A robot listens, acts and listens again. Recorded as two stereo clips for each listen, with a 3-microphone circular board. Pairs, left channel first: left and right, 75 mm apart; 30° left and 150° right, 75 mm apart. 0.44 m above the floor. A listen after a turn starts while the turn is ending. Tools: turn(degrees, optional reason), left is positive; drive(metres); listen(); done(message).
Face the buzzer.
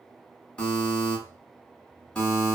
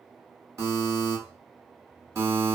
turn(degrees=165, reason="The buzzer: 165° left.")
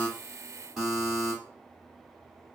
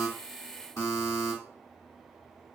turn(degrees=-10, reason="The buzzer is now 10° right.")
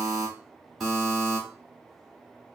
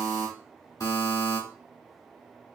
done("Facing the buzzer.")